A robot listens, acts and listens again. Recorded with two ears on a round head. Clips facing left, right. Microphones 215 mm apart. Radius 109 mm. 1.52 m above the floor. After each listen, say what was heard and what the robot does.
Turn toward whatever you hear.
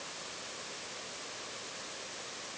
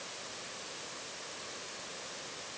Keep listening.
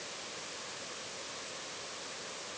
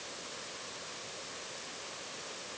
Keep listening.
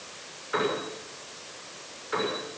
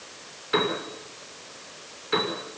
The piano: about 45° right or 135° right. Turn 45° right.
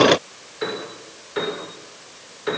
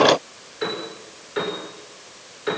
Facing the piano, over 4 m away.